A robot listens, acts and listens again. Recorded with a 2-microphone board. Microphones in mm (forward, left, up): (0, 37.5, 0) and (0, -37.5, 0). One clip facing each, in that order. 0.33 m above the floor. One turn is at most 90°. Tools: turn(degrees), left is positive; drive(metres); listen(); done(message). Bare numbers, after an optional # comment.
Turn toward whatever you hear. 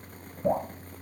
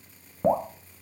# The dripping: about 50° right or 130° right.
turn(-50)
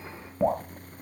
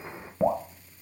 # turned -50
done("Facing the dripping, 1 to 2 m away.")